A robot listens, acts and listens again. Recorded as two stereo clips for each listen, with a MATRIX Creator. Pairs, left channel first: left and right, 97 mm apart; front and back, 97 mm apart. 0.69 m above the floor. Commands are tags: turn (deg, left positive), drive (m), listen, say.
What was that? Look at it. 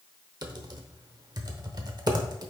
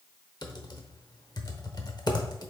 <turn deg="-45"/>
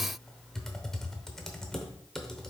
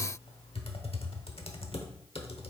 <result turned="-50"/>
<say>Found it: typing on a keyboard, straight ahead.</say>